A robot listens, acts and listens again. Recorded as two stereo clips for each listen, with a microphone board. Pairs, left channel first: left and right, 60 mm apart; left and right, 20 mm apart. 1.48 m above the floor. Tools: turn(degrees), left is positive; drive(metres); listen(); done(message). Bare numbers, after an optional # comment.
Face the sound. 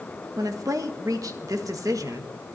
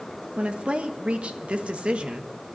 # The woman speaking: about 70° right or 110° right.
turn(-70)
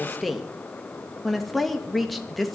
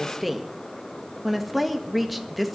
done("Found it: a woman speaking, straight ahead.")